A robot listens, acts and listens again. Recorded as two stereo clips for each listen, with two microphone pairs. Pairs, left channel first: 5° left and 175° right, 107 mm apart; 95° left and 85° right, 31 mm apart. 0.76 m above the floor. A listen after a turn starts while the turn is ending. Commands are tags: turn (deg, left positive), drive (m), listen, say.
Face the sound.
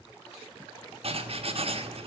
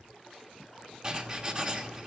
<turn deg="-150"/>
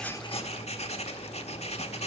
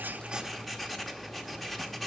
<turn deg="10"/>
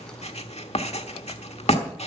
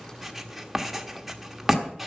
<say>Facing the writing, 1 to 2 m away.</say>